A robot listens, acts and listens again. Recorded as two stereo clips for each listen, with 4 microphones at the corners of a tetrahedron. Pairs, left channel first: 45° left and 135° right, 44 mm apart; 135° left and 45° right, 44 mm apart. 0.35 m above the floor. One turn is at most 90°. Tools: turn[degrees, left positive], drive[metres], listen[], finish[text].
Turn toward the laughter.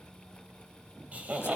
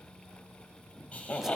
Thought: The laughter: 175° right.
Action: turn[-90]
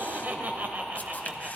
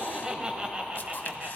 Thought: The laughter is now 85° right.
Action: turn[-85]
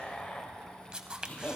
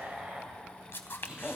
Thought: The laughter is now 15° left.
Action: turn[15]
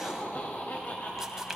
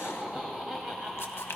Thought: The laughter is now 30° left.
Action: turn[30]
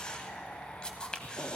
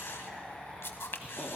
Action: finish[Found it: laughter, straight ahead.]